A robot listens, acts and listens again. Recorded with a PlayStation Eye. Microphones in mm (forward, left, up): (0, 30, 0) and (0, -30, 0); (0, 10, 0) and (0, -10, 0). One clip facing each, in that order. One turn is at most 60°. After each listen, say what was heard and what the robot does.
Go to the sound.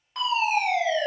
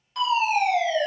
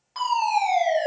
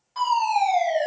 The fire alarm: about 30° left or 150° left. Turn 30° left.
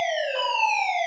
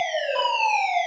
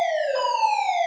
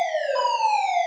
Drive 1.0 m forward.
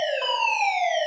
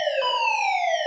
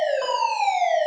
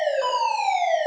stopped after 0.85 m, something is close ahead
The fire alarm is now 15° left. Turn 15° left.
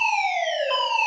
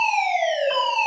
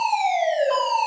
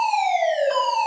Arrived at the fire alarm, straight ahead.